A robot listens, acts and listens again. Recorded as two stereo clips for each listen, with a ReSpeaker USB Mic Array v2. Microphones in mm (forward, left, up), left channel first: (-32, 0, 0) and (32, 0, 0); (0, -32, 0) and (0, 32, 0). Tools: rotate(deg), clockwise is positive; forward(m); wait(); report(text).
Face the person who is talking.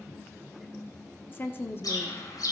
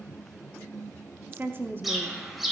rotate(-135)
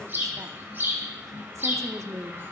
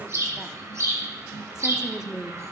rotate(-15)
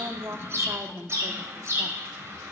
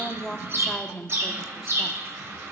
report("Facing the woman speaking, under 1 m away.")